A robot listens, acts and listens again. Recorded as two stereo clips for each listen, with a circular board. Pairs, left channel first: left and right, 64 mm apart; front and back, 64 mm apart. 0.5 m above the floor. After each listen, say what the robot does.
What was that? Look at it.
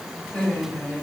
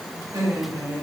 Turn 160° left.
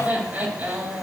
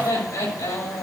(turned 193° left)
Turn 30° right.
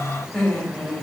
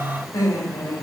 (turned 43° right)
Turn 10° left.
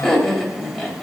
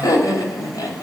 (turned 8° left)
Facing the laughter, 2 to 4 m away.